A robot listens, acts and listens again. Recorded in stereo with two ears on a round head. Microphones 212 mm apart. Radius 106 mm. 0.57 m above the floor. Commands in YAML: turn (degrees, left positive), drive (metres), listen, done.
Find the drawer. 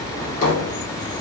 turn: 35
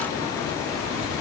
done: "Found it: a drawer, straight ahead."